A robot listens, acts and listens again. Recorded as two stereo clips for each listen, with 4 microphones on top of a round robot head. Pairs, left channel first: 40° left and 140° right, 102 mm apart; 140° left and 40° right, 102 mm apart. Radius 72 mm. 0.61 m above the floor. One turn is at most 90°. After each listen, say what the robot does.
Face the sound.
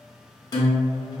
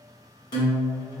Turn 90° left.
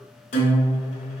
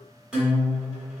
Turn 40° left.
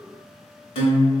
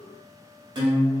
Found it: a guitar, straight ahead.